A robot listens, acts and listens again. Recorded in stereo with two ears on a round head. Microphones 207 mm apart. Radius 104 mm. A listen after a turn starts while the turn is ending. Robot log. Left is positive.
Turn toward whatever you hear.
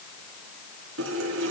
note: The running tap: about 60° right or 120° right.
cmd yaw -60
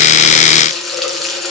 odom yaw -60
end: Found it: a running tap, straight ahead, over 4 m away.